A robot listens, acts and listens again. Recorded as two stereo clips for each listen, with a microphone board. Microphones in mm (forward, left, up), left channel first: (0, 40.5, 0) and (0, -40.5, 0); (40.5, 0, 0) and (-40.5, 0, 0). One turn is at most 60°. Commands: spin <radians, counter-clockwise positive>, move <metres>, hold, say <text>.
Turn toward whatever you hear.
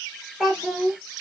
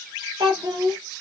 spin 1.05
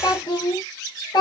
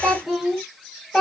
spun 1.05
spin 1.05
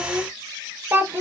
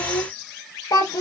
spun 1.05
spin -0.61
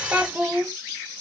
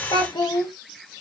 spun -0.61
spin -0.35
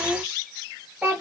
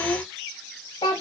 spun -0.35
spin -0.26
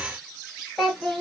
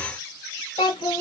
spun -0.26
say Found it: a child speaking, straight ahead.